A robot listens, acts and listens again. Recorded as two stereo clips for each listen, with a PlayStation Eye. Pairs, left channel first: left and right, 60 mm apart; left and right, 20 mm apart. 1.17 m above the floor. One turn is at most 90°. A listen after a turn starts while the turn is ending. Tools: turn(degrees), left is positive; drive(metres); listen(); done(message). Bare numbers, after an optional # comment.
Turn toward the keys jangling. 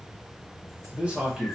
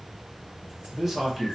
listen()
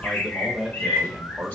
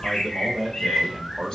listen()
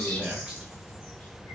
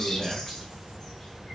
done("I can't make out keys jangling, only a bird and a man speaking.")